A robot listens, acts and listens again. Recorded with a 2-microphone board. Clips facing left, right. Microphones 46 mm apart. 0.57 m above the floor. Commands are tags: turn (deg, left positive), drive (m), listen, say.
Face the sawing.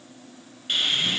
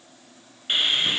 <turn deg="-20"/>
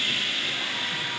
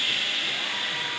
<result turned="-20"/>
<say>Found it: sawing, straight ahead.</say>